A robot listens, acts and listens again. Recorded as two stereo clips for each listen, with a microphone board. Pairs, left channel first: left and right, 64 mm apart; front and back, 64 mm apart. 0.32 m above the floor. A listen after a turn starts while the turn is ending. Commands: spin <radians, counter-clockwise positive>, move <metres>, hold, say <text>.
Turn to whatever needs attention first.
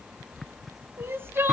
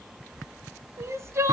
spin -2.44
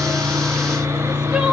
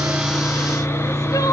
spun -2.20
spin -0.26
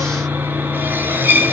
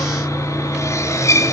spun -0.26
hold
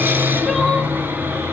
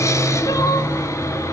say Facing where the crying came from. I can't hear it now.